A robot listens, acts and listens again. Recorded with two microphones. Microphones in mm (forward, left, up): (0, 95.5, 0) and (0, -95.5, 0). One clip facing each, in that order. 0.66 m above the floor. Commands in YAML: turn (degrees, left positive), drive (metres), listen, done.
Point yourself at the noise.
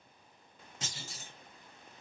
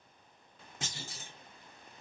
turn: -55
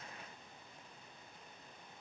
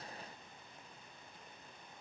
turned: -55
listen: true
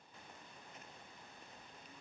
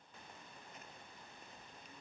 done: "I heard a clunk, but can't make it out now. It was about straight ahead or 70° right."